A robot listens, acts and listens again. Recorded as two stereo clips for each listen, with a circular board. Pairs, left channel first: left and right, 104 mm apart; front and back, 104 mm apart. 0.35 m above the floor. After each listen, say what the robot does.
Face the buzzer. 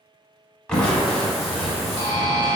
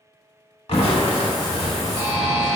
Turn 55° right.
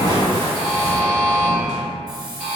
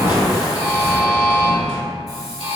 Turn 20° right.
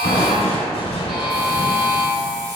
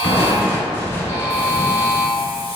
Found it: a buzzer, straight ahead, 1 to 2 m away.